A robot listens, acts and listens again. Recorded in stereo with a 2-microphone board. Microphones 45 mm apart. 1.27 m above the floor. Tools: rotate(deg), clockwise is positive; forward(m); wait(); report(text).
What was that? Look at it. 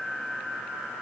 wait()
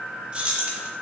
rotate(30)
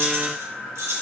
rotate(95)
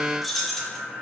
rotate(-10)
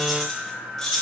rotate(-15)
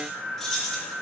rotate(-10)
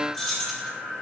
report("Found it: keys jangling, straight ahead, 2 to 4 m away.")